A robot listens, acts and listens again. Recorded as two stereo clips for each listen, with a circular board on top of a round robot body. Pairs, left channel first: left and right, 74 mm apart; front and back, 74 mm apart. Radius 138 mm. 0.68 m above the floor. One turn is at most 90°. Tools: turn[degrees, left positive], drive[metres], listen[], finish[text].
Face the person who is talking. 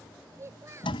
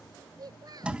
Thought: The child speaking: 145° right.
Action: turn[-90]
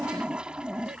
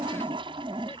Thought: Nothing new. It was at 55° right.
Action: turn[-55]
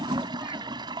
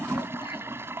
Action: listen[]
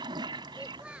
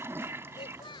Thought: The child speaking is now 15° right.
Action: turn[-15]
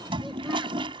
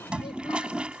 Action: listen[]
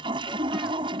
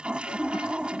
Action: listen[]
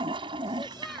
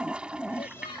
Action: finish[Facing where the child speaking came from. I can't hear it now.]